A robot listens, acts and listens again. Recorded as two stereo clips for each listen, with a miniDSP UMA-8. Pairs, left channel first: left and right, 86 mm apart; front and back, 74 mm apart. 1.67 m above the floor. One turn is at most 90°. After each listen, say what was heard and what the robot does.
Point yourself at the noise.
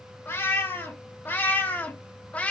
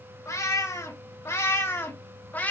The cat meowing: 35° left. Turn 35° left.
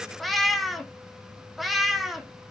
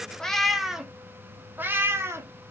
The cat meowing is now 175° right. Turn 90° right.
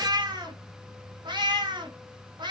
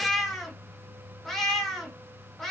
The cat meowing is now 85° right. Turn 85° right.
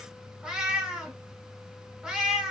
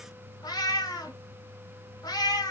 Found it: a cat meowing, straight ahead.